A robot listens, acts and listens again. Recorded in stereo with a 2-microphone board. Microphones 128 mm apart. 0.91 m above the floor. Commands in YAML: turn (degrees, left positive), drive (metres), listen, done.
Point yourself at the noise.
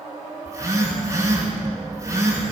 turn: -25
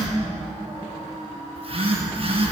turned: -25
turn: -130
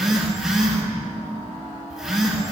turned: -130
done: "Facing the phone buzzing, over 4 m away."